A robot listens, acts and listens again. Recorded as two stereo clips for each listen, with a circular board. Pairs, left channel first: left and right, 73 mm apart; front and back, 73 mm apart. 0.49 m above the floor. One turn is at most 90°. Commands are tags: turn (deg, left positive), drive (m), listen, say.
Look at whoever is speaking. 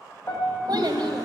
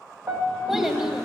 <turn deg="-90"/>
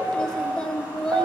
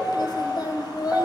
<turn deg="10"/>
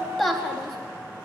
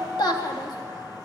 <say>Found it: a child speaking, straight ahead.</say>